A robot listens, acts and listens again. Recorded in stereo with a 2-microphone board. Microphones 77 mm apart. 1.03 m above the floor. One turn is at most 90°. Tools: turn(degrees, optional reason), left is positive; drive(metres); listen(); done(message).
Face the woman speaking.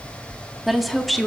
turn(degrees=30)
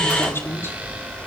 turn(degrees=90, reason="So it is at 145° left.")
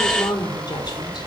turn(degrees=75, reason="The woman speaking is now 75° left.")
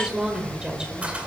turn(degrees=-10, reason="The woman speaking is now 10° right.")
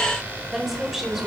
done("Facing the woman speaking, over 4 m away.")